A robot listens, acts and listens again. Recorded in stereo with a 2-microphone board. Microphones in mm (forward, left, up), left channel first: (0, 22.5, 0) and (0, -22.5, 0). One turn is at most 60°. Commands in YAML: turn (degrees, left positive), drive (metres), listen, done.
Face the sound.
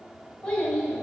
turn: 20
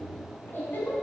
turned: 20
turn: 60
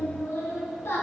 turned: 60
turn: 60
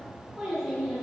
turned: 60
done: "Found it: a child speaking, straight ahead."